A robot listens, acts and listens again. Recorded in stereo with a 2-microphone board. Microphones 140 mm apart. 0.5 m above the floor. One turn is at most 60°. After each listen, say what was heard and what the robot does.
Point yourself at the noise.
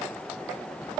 Keep listening.
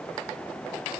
Keep listening.
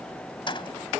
The keys jangling: about 35° left or 145° left. Turn 35° left.
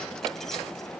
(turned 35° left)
Keep listening.
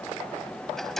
Facing the keys jangling.